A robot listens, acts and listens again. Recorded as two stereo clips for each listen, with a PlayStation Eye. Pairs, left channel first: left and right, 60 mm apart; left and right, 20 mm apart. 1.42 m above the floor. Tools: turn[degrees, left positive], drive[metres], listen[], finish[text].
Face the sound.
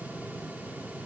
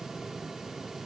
Action: listen[]
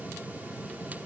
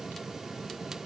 Action: listen[]
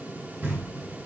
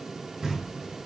Thought: The knocking: about 30° right or 150° right.
Action: turn[-30]
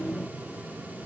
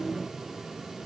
Action: listen[]
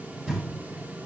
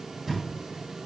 Action: finish[Facing the knocking.]